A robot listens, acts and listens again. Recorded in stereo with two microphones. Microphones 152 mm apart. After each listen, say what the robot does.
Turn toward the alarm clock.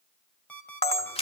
Turn 30° left.
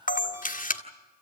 Keep listening.
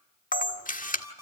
Turn 20° right.
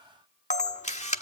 Keep listening.
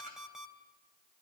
Facing the alarm clock.